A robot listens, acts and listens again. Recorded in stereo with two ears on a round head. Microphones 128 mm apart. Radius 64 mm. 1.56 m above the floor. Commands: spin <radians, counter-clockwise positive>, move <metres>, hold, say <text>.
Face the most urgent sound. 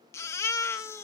spin 0.35
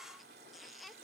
say Found it: a baby crying, straight ahead.